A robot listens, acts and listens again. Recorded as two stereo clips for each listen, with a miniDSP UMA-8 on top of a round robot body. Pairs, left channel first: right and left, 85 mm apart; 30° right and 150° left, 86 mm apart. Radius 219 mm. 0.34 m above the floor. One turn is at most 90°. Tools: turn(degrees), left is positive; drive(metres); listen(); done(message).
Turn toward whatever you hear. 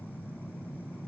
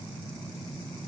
listen()
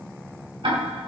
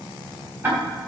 turn(degrees=85)
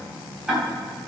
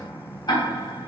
turn(degrees=10)
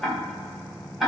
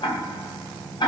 done("Facing the ticking, 2 to 4 m away.")